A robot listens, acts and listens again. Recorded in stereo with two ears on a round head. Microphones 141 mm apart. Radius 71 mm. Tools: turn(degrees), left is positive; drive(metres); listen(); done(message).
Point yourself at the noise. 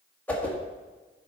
turn(degrees=30)
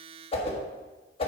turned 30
turn(degrees=140)
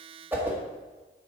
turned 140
turn(degrees=-10)
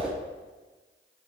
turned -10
done("Found it: a whoosh, straight ahead, 1 to 2 m away.")